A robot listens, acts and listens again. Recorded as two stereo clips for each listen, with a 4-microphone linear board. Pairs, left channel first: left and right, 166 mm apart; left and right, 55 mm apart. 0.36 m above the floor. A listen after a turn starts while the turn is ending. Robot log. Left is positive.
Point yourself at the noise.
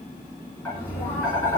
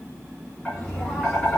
cmd yaw +30
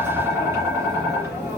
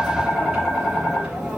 note: So it is at 15° right.
cmd yaw -15
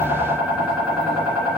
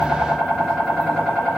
end: Found it: tapping, straight ahead.